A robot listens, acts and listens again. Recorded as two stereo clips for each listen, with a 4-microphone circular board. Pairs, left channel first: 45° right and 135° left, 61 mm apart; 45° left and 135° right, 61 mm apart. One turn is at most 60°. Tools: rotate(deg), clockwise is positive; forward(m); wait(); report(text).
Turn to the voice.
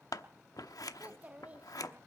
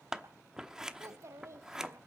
rotate(60)
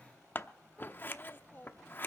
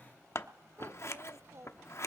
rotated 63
rotate(60)
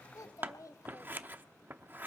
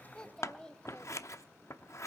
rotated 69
rotate(30)
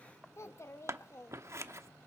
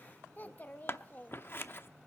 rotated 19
rotate(10)
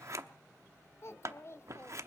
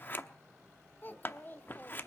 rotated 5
report("Facing the child speaking.")